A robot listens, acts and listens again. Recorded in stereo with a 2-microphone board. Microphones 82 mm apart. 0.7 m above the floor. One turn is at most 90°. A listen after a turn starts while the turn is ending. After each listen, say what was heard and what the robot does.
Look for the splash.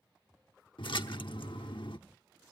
Turn 90° left.
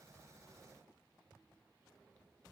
Facing where the splash came from. I can't hear it now.